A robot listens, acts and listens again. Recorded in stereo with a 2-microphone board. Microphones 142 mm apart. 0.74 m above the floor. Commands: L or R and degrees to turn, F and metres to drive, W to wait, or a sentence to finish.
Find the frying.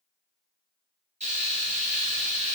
R60
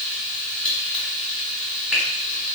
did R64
Facing the frying, 1 to 2 m away.